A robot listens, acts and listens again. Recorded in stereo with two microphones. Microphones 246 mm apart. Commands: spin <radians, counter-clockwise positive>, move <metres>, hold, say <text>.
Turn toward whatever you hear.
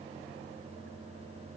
hold
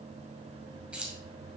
spin -0.52
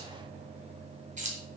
spin -2.62
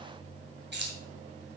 spin -0.87
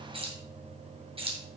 spin -0.44
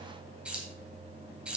say Found it: keys jangling, straight ahead, 2 to 4 m away.